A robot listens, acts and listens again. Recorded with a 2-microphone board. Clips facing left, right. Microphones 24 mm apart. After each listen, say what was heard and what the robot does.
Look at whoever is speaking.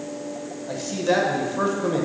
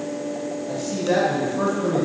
The man speaking: about 20° left or 160° left. Turn 20° left.
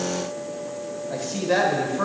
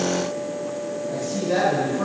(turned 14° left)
So it is at 150° left. Turn 150° left.
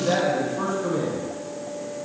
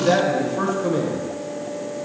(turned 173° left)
The man speaking is now 30° right. Turn 30° right.
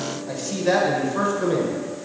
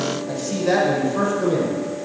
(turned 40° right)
The man speaking is now 10° left. Turn 10° left.
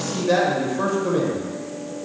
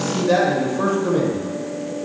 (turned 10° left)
Facing the man speaking.